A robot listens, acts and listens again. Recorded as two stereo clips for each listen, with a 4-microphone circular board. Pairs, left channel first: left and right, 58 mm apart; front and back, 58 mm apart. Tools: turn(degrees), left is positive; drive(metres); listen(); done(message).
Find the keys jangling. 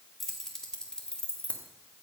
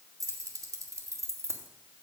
turn(degrees=155)
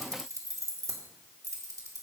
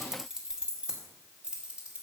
turn(degrees=-110)
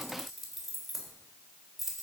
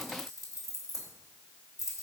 done("Found it: keys jangling, straight ahead.")